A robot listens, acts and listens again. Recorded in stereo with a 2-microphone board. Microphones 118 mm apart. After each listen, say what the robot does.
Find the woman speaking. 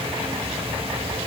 Keep listening.
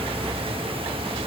Keep listening.
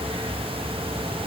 I can't make out a woman speaking.